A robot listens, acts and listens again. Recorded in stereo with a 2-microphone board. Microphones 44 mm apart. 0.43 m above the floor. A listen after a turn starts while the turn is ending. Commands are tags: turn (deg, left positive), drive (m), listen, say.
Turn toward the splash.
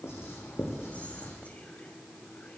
<listen/>
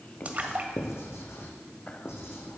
<turn deg="-35"/>
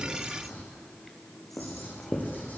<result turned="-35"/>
<listen/>
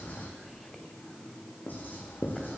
<say>I heard a splash, but can't make it out now. It was about straight ahead or 110° right.</say>